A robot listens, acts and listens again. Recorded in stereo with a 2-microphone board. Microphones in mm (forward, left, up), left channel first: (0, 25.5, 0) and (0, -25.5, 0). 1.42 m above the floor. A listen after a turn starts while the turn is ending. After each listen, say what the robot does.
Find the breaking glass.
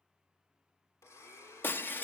Turn 45° left.
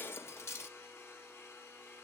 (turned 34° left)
Turn 90° left.
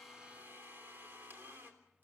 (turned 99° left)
Turn 10° right.
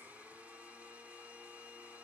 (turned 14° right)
Facing where the breaking glass came from. I can't hear it now.